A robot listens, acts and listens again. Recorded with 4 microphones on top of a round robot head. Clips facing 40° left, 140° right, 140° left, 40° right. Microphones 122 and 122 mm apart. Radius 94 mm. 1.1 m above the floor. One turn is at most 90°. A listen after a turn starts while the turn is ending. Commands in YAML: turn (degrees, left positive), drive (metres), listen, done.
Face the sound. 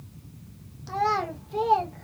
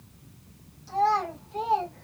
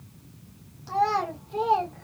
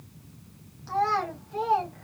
turn: 75
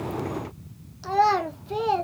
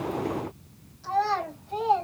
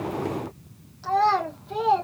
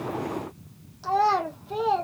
turn: 50
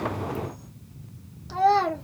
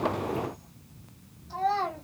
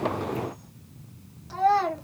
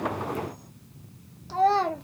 turn: 30
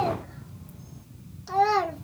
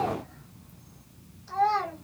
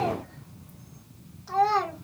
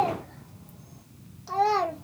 turn: 25
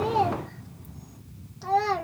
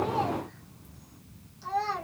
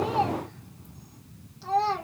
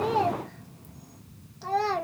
done: "Found it: a child speaking, straight ahead, 1 to 2 m away."